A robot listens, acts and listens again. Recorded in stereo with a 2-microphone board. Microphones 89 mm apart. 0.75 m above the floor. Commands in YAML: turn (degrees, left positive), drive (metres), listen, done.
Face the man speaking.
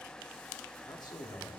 turn: 50
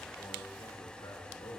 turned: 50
turn: 70
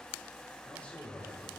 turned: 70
turn: 15
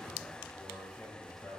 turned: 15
done: "Found it: a man speaking, straight ahead, over 4 m away."